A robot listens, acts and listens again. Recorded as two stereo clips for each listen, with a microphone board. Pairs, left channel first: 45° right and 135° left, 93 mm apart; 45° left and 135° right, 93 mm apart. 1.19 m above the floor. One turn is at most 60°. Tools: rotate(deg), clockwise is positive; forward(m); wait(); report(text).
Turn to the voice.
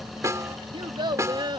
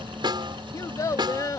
rotate(-60)
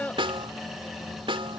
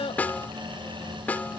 rotate(-30)
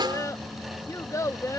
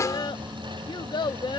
rotate(-10)
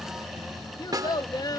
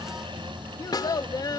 report("Found it: a child speaking, straight ahead.")